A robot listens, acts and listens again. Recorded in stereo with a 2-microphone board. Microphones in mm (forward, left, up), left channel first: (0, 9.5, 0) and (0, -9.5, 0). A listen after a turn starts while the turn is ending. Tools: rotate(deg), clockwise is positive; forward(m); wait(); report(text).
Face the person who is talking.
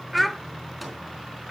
rotate(-30)
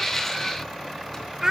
rotate(30)
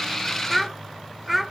report("Facing the child speaking, 1 to 2 m away.")